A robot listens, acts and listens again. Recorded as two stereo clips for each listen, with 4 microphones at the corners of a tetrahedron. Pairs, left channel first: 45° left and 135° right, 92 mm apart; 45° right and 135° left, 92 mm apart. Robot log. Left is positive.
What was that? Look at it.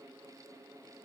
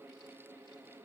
cmd idle
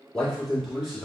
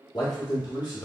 note: The man speaking: 55° right.
cmd yaw -55
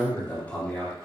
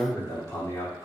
note: The man speaking is now 30° right.
cmd yaw -30
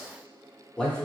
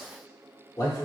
note: The man speaking is now 35° right.
cmd yaw -35
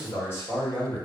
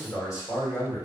note: The man speaking is now 20° right.
cmd yaw -20
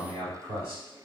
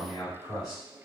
note: The man speaking is now 15° right.
cmd yaw -15
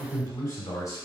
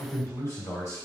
end: Found it: a man speaking, straight ahead.